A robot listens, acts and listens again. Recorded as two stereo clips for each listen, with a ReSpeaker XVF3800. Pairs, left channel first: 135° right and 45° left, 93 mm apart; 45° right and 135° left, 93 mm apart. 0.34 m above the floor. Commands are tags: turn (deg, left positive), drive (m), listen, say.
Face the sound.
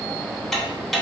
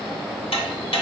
<turn deg="-45"/>
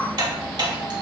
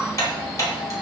<turn deg="10"/>
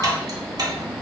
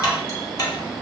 <say>Found it: ticking, straight ahead.</say>